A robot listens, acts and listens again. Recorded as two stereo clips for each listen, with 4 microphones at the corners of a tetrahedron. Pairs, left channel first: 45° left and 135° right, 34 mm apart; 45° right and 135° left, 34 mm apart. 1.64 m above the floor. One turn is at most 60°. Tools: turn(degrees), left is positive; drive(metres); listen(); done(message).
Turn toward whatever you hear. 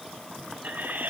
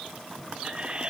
turn(degrees=-60)
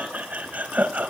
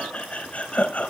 turn(degrees=-60)
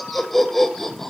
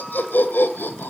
turn(degrees=-30)
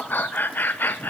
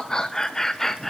turn(degrees=35)
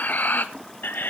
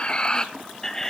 turn(degrees=35)
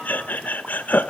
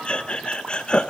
turn(degrees=15)
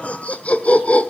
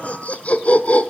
done("Facing the laughter.")